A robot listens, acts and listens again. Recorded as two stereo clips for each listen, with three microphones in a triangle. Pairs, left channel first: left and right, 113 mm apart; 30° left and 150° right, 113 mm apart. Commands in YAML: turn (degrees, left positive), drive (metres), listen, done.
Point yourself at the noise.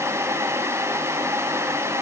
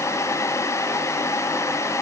listen: true
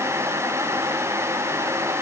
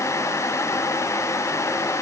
listen: true
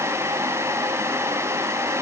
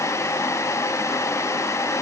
done: "I can't make out anything."